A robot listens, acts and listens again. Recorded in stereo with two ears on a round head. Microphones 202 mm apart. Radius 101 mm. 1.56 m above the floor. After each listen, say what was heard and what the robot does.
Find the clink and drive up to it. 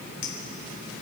The clink: about 50° left or 130° left. Turn 50° left.
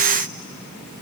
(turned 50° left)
Keep listening.
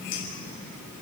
Keep listening.
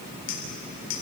So it is at 80° left. Turn 80° left.
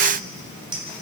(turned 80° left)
The clink is now 20° right. Turn 20° right.
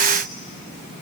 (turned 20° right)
Keep listening.
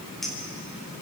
Drive 1.0 m forward.
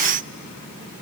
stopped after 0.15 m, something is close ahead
Keep listening.
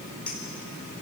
Something is in my way. I am facing the clink but have not reached it.